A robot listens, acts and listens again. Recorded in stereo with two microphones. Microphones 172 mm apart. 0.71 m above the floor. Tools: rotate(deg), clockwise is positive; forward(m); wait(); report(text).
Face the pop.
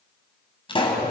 rotate(-30)
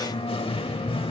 wait()
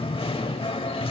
report("I heard a pop, but can't make it out now. It was about straight ahead or 120° left.")